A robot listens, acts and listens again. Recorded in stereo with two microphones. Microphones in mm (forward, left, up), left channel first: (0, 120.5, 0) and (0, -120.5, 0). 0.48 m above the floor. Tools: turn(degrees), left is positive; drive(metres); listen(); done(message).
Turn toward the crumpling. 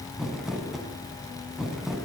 turn(degrees=30)
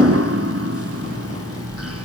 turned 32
listen()
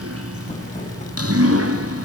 listen()
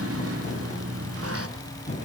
turn(degrees=150)
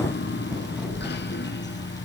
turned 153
listen()
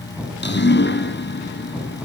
done("Found it: crumpling, straight ahead, over 4 m away.")